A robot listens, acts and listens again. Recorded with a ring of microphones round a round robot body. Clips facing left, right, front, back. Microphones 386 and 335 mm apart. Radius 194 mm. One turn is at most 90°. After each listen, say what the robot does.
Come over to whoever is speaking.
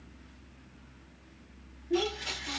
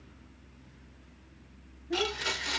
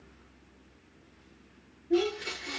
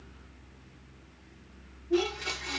Turn 60° right.
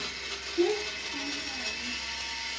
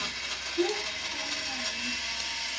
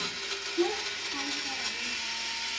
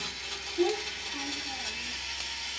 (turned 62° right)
Drive 1.0 m forward.
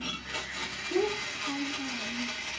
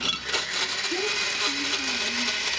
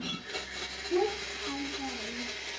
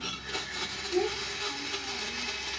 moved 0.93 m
Drive 1.0 m forward.
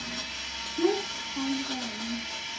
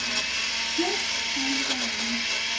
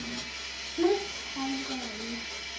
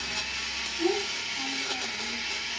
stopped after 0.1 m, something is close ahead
I am next to the child speaking.